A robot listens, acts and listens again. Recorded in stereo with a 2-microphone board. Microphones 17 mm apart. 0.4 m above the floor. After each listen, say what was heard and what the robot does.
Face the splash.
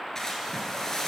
The splash: about 35° left or 145° left. Turn 35° left.
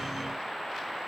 Keep listening.
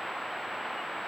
I heard a splash, but can't make it out now. It was about straight ahead or 110° left.